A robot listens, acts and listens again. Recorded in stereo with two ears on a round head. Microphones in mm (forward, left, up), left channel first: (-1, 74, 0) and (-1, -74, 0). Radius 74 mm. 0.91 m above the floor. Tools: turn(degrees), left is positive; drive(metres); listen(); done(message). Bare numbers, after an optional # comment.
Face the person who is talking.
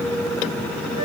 listen()
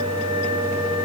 listen()
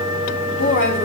turn(90)
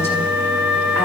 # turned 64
# Nothing new. It was at 25° left.
turn(25)
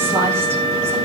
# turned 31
listen()
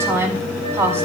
# The woman speaking is now 15° right.
turn(-15)
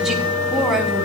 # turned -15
done("Facing the woman speaking.")